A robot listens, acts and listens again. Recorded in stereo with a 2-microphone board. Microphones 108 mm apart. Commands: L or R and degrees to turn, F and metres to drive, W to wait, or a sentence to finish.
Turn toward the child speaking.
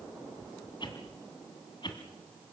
W
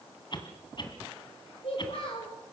L55
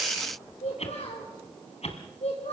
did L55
L85
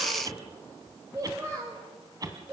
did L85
R25
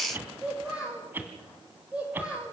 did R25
R10
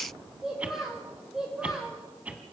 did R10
Facing the child speaking, 2 to 4 m away.